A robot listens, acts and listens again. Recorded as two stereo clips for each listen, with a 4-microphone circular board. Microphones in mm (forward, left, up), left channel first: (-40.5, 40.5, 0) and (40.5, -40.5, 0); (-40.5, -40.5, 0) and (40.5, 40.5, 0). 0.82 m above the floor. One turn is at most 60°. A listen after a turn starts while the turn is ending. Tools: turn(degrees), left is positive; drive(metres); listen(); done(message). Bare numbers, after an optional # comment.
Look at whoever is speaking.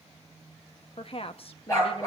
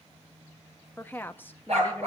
# The woman speaking: 155° left.
turn(60)
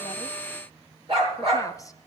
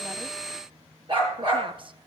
# The woman speaking is now 80° left.
turn(60)
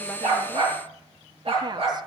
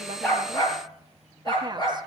done("Found it: a woman speaking, straight ahead.")